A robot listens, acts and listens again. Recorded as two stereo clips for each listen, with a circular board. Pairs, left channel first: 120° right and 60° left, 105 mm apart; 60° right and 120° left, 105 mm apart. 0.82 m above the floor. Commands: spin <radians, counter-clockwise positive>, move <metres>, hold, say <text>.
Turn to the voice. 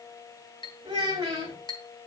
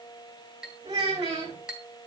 spin 1.92
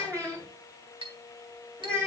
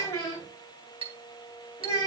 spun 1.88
say Facing the child speaking.